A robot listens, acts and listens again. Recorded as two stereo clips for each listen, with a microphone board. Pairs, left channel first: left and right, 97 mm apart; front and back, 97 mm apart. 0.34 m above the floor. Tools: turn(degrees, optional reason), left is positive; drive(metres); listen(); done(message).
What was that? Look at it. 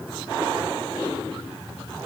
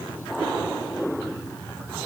listen()
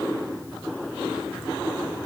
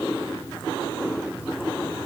listen()
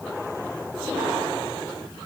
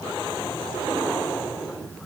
done("I can't make out anything to turn to.")